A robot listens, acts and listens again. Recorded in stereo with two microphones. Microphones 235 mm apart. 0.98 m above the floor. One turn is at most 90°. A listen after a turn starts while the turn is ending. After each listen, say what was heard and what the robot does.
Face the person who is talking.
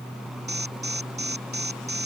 Keep listening.
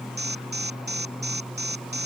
Keep listening.
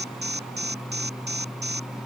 I can't make out anyone speaking to turn to.